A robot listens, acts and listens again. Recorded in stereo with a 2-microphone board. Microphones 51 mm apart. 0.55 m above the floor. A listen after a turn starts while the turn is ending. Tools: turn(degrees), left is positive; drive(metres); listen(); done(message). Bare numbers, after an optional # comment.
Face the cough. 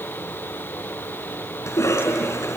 # The cough: about 75° left or 105° left.
turn(75)
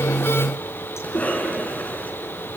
# So it is at 30° left.
turn(30)
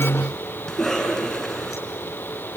done("Found it: a cough, straight ahead, over 4 m away.")